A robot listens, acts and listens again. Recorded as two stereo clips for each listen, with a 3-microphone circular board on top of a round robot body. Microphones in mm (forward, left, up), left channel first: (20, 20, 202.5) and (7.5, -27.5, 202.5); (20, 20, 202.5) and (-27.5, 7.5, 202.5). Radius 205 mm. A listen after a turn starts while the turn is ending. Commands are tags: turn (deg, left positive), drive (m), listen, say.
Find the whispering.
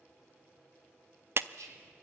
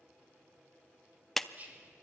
<turn deg="-105"/>
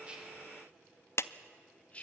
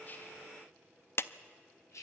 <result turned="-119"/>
<turn deg="15"/>
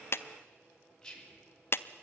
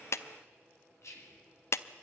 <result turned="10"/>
<say>Found it: whispering, straight ahead, 2 to 4 m away.</say>